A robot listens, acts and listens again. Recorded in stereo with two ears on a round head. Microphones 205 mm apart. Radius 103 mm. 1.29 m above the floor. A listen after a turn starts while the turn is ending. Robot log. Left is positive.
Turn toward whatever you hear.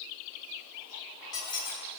note: The squeak: about 20° left or 160° left.
cmd yaw +20
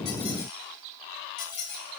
note: So it is at 140° left.
cmd yaw +140
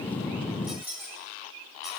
note: The squeak is now 10° right.
cmd yaw -10
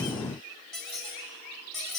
end: Found it: a squeak, straight ahead, 2 to 4 m away.